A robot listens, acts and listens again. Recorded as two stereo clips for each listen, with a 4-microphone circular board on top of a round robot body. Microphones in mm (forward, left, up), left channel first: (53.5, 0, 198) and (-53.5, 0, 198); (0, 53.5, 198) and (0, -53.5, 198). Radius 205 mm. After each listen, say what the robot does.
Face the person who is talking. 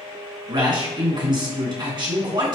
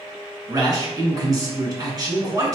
Turn 140° right.
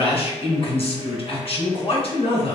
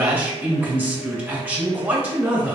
Turn 20° right.
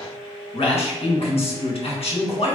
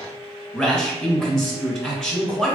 Facing the man speaking, 1 to 2 m away.